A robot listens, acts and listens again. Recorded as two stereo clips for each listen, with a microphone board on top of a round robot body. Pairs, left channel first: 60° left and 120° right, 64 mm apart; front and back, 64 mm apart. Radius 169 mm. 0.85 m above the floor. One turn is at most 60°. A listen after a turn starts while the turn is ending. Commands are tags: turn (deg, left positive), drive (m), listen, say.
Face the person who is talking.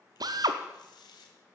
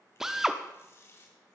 <listen/>
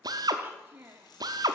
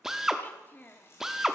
<turn deg="-60"/>
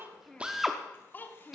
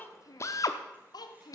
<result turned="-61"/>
<say>Found it: a child speaking, straight ahead, 1 to 2 m away.</say>